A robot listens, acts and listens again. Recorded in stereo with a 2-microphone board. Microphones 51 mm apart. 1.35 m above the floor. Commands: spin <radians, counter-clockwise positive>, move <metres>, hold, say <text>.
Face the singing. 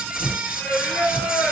spin 0.52
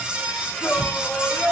spin 2.09
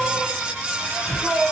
say Found it: singing, straight ahead.